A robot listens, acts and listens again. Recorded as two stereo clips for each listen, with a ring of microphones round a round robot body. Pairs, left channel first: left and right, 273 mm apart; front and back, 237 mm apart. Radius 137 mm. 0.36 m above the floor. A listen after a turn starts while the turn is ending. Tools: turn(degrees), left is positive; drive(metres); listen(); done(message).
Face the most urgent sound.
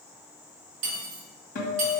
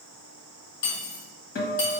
listen()
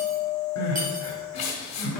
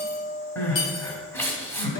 turn(degrees=75)
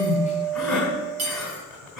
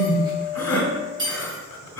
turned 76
done("Facing the crying, 1 to 2 m away.")